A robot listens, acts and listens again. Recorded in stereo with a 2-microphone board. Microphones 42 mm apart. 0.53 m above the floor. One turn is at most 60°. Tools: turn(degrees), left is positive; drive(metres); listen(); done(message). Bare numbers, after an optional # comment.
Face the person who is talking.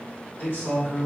# The man speaking: about 65° left or 115° left.
turn(60)
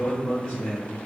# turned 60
# So it is at 35° left.
turn(35)
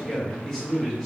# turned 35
done("Found it: a man speaking, straight ahead, 1 to 2 m away.")